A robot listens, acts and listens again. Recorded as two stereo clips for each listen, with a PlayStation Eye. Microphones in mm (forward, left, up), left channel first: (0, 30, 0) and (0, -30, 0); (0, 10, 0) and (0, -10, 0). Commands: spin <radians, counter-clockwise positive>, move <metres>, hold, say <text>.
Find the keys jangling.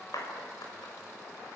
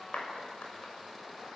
hold
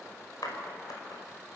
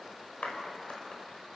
hold
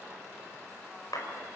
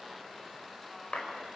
say I can't make out keys jangling to turn to.